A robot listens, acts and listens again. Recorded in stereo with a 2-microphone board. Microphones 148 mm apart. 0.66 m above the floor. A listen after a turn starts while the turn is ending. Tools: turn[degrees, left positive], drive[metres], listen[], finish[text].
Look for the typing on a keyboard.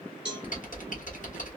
Thought: The typing on a keyboard: about 60° left or 120° left.
Action: turn[60]
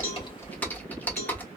Thought: So it is at 10° left.
Action: turn[10]
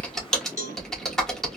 Action: finish[Facing the typing on a keyboard, 1 to 2 m away.]